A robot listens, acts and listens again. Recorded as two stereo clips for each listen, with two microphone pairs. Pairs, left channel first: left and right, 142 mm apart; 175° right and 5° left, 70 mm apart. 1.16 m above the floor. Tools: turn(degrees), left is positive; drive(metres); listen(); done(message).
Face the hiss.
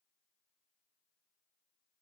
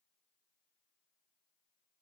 listen()
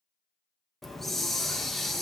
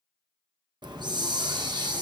done("Found it: a hiss, straight ahead, under 1 m away.")